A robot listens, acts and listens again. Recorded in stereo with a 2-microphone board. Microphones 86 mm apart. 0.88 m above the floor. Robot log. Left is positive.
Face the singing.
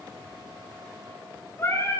note: The singing: about 30° left or 150° left.
cmd yaw +30
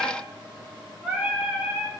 note: So it is at 10° right.
cmd yaw -10
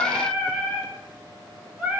note: The singing is now 15° right.
cmd yaw -15
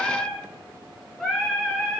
end: Facing the singing, over 4 m away.